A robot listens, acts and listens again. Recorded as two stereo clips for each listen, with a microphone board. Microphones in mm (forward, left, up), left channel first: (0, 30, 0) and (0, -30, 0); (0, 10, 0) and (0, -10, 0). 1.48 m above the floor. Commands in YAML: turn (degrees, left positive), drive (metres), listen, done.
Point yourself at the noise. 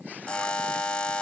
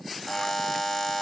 turn: 15
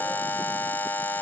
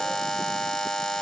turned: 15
turn: 150
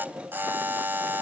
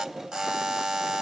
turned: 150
turn: -30
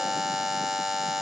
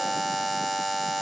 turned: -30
done: "Found it: a buzzer, straight ahead."